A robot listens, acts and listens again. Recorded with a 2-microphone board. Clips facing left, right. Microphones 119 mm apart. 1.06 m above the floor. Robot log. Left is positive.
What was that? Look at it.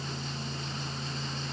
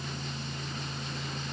cmd idle
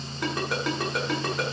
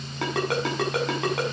cmd yaw -90
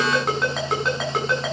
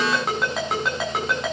end: Found it: a ringtone, straight ahead, over 4 m away.